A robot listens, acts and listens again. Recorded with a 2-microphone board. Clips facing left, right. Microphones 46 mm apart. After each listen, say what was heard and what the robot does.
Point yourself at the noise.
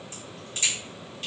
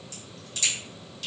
The crack: about 35° left or 145° left. Turn 35° left.
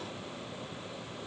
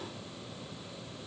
Keep listening.
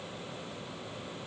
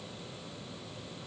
I heard a crack, but can't make it out now. It was about straight ahead or 110° left.